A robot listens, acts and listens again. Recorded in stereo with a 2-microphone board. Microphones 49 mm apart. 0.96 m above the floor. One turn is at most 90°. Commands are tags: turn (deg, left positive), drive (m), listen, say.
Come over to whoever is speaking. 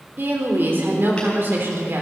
<turn deg="-50"/>
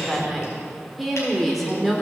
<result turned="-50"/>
<drive m="1.0"/>
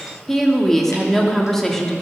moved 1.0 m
<drive m="1.0"/>
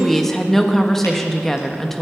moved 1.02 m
<drive m="1.0"/>
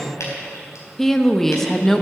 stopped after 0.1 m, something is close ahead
<say>Arrived at the woman speaking, straight ahead.</say>